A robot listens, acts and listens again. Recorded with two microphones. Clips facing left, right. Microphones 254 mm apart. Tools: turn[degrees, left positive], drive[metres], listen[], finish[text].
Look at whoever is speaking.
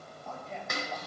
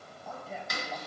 Action: turn[-30]
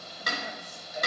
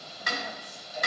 Action: listen[]
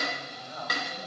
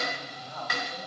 Thought: So it is at 25° left.
Action: turn[25]
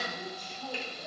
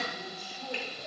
Thought: The man speaking is now 10° right.
Action: turn[-10]
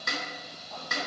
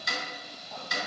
Action: listen[]
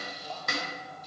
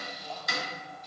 Action: listen[]
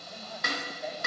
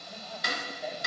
Action: finish[Facing where the man speaking came from. I can't hear it now.]